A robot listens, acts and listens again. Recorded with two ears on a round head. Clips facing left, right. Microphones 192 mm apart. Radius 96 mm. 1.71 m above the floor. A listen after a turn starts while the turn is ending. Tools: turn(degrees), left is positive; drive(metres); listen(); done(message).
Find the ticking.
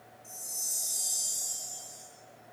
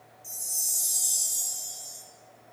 listen()
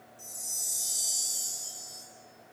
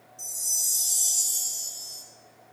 listen()
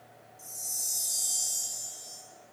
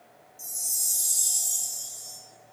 done("I can't make out ticking, only a chime.")